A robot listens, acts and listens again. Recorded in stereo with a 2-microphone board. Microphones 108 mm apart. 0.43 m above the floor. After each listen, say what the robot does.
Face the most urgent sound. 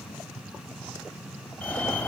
Turn 30° left.
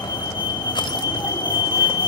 Turn 135° left.
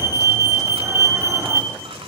Turn 25° right.
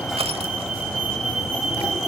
Facing the fire alarm.